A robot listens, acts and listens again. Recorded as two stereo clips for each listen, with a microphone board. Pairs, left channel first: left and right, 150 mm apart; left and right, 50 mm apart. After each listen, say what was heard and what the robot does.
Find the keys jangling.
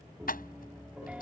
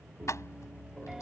Turn 90° left.
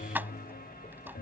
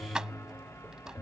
So it is at 15° right. Turn 15° right.
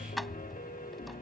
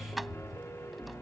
Keep listening.
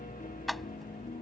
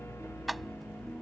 Facing the keys jangling.